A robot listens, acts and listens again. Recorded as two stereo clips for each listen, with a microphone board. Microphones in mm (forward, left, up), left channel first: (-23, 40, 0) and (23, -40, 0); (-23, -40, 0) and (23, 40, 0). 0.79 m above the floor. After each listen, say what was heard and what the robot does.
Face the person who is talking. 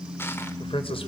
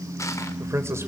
The man speaking: 120° left. Turn 120° left.
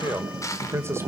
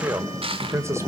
Facing the man speaking, 2 to 4 m away.